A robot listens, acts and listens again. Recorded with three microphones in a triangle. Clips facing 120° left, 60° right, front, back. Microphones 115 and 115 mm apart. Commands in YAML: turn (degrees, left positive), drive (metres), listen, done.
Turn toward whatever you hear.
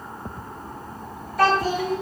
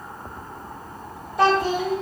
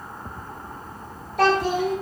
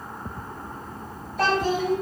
done: "Found it: a child speaking, straight ahead, 1 to 2 m away."